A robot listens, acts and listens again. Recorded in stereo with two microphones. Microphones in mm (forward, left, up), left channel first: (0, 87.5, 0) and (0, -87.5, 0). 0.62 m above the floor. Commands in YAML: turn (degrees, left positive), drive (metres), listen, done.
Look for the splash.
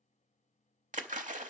turn: -45
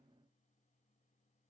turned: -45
listen: true
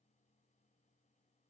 done: "I heard a splash, but can't make it out now. It was about straight ahead or 90° right."